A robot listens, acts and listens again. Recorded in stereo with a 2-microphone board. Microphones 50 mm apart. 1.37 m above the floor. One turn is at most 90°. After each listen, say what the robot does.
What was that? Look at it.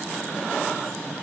Keep listening.
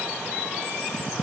Keep listening.
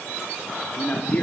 Turn 30° left.
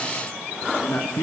Turn 90° left.
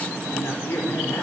Turn 60° left.
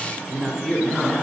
Turn 20° left.
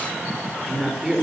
Found it: a man speaking, straight ahead, over 4 m away.